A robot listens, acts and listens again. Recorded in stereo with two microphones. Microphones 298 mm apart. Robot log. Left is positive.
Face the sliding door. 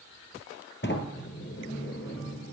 note: The sliding door: about 40° left or 140° left.
cmd yaw +40
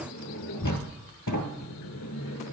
note: So it is at 100° left.
cmd yaw +100
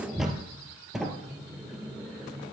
end: Found it: a sliding door, straight ahead, 1 to 2 m away.